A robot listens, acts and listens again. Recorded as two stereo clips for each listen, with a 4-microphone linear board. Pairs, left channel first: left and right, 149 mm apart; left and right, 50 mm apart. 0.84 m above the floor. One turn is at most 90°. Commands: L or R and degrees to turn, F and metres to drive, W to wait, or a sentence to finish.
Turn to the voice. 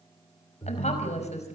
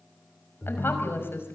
L50
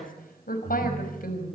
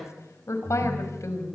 L80
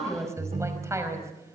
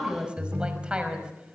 R20
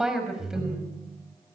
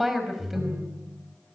Found it: a woman speaking, straight ahead.